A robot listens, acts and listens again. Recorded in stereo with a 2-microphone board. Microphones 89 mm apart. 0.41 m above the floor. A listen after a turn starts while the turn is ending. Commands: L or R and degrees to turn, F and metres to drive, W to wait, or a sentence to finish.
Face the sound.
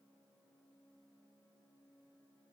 W
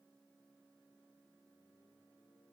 W
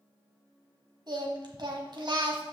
R60
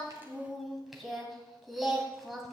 Found it: singing, straight ahead, 1 to 2 m away.